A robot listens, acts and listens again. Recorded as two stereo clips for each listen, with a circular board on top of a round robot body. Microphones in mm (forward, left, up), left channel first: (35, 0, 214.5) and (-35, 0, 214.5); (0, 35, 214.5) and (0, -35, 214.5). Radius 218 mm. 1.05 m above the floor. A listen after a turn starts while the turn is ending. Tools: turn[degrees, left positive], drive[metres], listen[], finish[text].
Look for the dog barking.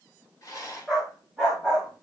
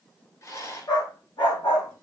Thought: The dog barking: 100° left.
Action: turn[100]
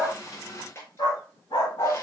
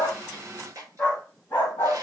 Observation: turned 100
Thought: The dog barking is now 25° left.
Action: turn[25]
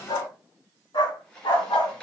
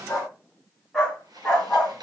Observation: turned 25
Thought: The dog barking is now 10° left.
Action: turn[10]
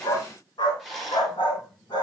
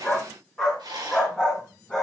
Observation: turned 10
Thought: The dog barking is now 10° left.
Action: turn[10]
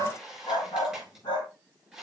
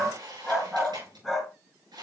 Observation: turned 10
Action: finish[Found it: a dog barking, straight ahead.]